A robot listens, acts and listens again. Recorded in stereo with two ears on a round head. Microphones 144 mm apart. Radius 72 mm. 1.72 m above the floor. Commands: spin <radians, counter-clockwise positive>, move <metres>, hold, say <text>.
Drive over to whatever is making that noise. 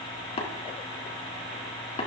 spin 0.70
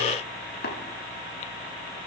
spin 1.75
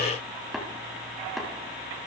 move 1.0
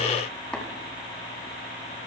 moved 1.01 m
hold
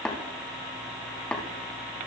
move 1.0
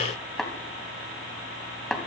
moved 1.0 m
move 1.0
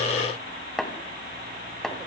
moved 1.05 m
move 1.0
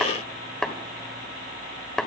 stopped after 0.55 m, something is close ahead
spin 0.17
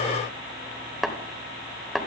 say I am next to the tapping.